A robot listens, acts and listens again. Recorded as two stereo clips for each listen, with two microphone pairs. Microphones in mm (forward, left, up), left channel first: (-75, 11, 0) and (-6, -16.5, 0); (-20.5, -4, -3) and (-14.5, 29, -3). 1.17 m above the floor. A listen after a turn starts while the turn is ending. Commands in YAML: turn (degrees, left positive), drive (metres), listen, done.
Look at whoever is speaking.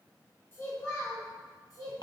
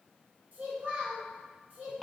turn: 125
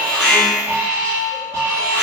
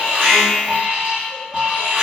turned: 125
listen: true
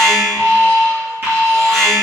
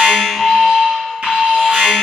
listen: true
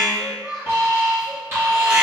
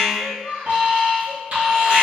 turn: 65
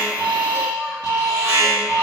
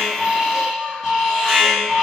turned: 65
listen: true
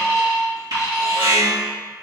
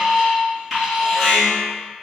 listen: true
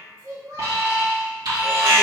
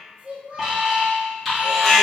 turn: 20
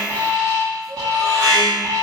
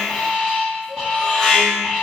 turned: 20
listen: true
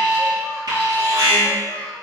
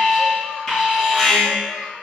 listen: true
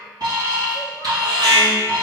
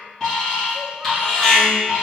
done: "I heard a child speaking from this way, but can't make it out now."